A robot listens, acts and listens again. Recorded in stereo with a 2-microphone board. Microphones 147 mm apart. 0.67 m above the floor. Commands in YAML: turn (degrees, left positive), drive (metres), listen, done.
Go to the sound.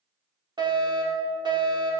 turn: -30
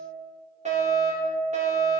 turn: -120
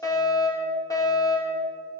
turn: 25
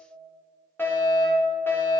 turn: 15
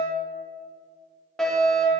drive: 1.0
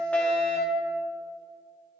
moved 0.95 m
turn: 15
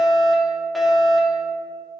drive: 1.0
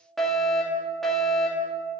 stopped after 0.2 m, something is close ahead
done: "I am next to the fire alarm."